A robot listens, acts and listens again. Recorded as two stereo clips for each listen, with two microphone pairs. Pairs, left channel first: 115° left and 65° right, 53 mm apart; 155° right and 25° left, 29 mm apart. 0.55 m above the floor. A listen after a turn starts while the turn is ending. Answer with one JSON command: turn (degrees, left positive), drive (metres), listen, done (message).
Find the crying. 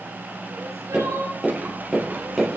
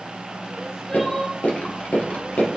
{"turn": -75}
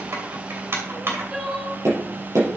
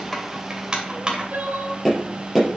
{"turn": 10}
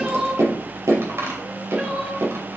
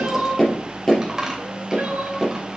{"done": "Facing the crying."}